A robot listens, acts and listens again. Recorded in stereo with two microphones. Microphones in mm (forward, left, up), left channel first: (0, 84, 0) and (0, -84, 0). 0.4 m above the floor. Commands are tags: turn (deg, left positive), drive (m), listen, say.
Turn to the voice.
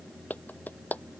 <listen/>
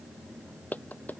<listen/>
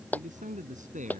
<turn deg="-45"/>
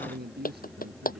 <turn deg="-75"/>
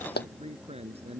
<turn deg="-40"/>
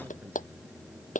<listen/>
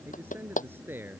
<turn deg="-15"/>
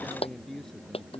<say>Facing the man speaking.</say>